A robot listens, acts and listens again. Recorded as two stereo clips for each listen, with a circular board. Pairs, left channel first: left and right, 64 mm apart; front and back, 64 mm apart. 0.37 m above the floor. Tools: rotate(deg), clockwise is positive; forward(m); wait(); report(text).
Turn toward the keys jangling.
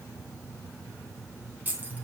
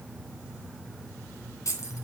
rotate(30)
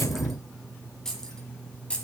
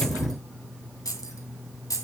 rotate(-20)
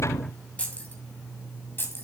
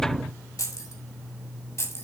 rotate(-40)
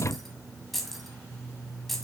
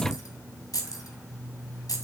report("Facing the keys jangling, 2 to 4 m away.")